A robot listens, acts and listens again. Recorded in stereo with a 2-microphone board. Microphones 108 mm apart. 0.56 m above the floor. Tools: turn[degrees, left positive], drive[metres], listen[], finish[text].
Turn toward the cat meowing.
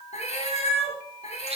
Action: turn[90]
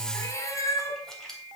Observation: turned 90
Thought: So it is at 30° left.
Action: turn[30]
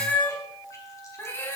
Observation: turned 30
Thought: The cat meowing is now 20° left.
Action: turn[20]
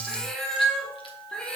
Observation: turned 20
Action: finish[Facing the cat meowing.]